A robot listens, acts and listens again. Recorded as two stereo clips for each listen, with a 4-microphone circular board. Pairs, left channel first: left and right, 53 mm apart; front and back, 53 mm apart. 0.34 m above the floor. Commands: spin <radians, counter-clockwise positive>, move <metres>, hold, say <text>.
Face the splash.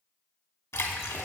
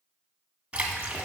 spin 2.01
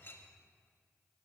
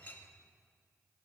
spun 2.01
say I heard a splash from this way, but can't make it out now.